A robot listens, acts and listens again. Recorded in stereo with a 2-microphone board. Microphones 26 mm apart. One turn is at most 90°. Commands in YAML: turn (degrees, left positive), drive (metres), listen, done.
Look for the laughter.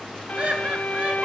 turn: -55
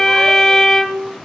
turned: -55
listen: true
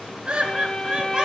turn: -30
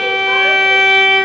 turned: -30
listen: true
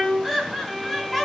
done: "Found it: laughter, straight ahead."